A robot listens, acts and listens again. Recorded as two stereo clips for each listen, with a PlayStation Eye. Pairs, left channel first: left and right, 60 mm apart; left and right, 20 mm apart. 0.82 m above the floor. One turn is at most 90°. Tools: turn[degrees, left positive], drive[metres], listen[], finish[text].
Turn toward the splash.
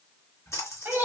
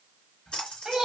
Thought: The splash: about 55° left or 125° left.
Action: turn[55]
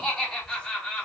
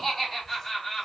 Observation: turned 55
Action: listen[]
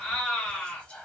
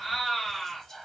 Action: finish[I heard a splash, but can't make it out now. It was about straight ahead or 70° left.]